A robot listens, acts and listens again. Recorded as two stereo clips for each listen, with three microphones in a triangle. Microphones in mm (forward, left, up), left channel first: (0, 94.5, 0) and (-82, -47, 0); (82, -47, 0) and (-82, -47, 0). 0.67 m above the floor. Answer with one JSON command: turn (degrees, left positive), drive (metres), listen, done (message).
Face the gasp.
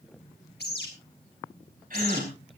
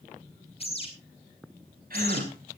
{"turn": -150}
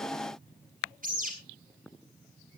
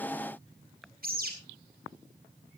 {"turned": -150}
{"done": "Facing where the gasp came from. I can't hear it now."}